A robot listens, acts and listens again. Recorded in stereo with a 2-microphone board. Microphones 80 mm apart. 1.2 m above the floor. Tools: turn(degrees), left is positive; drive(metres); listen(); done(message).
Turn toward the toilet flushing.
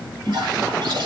turn(degrees=-70)
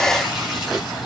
listen()
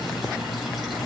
listen()
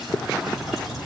done("I heard a toilet flushing, but can't make it out now. It was about straight ahead or 40° right.")